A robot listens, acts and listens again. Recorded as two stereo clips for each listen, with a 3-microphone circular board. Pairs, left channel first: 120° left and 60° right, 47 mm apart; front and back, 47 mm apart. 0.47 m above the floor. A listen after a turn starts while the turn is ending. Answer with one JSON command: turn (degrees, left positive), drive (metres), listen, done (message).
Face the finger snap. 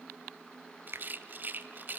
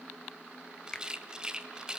{"turn": -70}
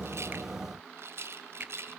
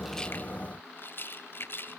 {"listen": true}
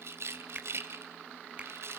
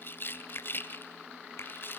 {"done": "Facing the finger snap, 1 to 2 m away."}